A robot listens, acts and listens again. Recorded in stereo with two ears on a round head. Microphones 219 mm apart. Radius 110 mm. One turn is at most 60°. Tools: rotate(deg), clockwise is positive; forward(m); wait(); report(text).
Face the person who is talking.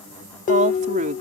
rotate(35)
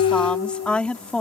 report("Found it: a woman speaking, straight ahead.")